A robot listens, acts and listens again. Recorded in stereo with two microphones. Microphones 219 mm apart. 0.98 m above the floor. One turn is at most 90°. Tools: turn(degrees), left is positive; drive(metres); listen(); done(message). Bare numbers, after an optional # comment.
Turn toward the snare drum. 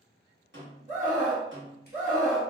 # The snare drum: about 60° right or 120° right.
turn(-60)
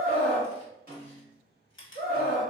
# So it is at 45° right.
turn(-45)
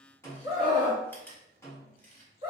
# The snare drum is now 15° left.
turn(15)
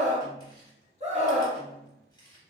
listen()
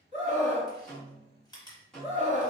done("Facing the snare drum.")